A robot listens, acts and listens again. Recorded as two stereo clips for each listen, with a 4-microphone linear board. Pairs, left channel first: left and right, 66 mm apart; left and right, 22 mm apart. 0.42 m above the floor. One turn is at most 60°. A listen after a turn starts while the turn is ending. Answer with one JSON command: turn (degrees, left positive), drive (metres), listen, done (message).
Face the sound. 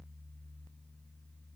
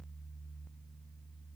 {"listen": true}
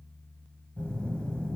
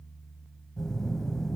{"turn": 15}
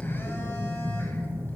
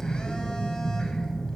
{"turn": 60}
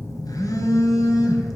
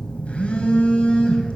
{"turn": 60}
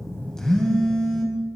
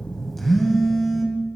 {"turn": 10}
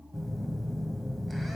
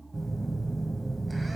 {"done": "Found it: a phone buzzing, straight ahead."}